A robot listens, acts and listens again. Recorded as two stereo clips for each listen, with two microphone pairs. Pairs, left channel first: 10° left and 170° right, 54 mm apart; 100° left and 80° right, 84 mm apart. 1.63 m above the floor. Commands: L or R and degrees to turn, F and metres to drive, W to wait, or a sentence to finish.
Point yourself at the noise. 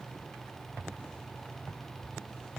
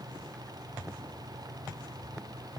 W
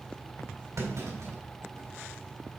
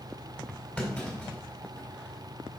L170
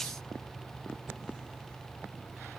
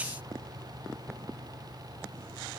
I heard a clunk from this way, but can't make it out now.